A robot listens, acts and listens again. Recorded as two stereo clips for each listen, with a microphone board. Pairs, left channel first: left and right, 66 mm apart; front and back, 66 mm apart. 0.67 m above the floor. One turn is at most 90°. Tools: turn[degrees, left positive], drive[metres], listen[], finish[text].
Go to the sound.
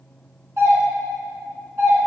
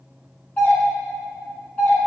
Thought: The doorbell: 60° right.
Action: turn[-60]
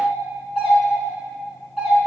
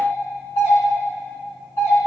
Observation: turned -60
Action: drive[1.0]
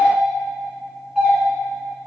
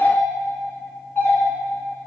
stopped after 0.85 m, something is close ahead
Thought: The doorbell is now 10° right.
Action: turn[-10]
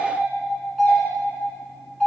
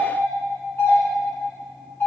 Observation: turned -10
Action: finish[Arrived at the doorbell, straight ahead.]